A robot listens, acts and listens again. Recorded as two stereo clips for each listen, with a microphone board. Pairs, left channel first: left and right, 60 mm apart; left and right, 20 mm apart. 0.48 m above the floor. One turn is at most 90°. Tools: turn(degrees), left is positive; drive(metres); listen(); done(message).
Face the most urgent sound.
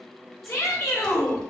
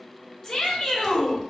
turn(degrees=55)
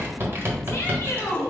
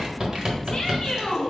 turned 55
turn(degrees=50)
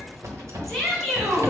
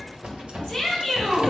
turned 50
done("Facing the shout, 1 to 2 m away.")